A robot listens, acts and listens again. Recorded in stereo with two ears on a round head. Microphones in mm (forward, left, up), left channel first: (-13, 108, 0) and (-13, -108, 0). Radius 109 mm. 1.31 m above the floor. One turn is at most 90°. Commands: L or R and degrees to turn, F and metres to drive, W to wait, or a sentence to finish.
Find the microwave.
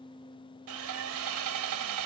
W
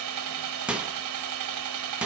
R30
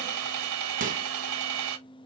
R90
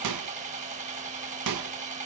R90
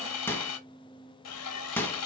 L10
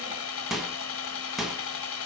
Facing the microwave, 1 to 2 m away.